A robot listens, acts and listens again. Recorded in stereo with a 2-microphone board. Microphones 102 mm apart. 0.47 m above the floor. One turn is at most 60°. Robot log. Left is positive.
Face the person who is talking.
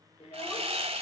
note: The child speaking: about 70° left or 110° left.
cmd yaw +60
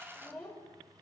note: So it is at 10° left.
cmd yaw +10
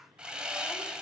cmd idle
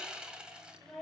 end: Facing the child speaking.